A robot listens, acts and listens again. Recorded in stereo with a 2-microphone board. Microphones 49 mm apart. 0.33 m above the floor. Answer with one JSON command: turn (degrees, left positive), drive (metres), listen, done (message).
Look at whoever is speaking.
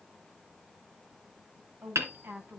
{"turn": -40}
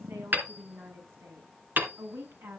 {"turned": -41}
{"turn": -115}
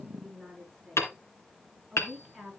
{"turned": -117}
{"done": "Found it: a woman speaking, straight ahead."}